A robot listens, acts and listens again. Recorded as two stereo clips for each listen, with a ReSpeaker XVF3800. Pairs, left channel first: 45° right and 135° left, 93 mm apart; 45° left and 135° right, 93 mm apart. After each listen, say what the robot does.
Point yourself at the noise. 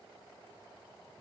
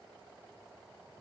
Keep listening.
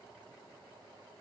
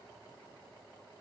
Keep listening.
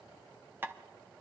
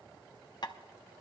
Turn 75° left.
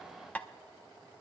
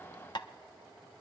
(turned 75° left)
Turn 25° left.
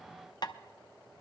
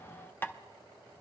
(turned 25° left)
Turn 15° right.
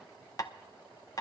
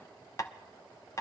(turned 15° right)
Facing the tapping, under 1 m away.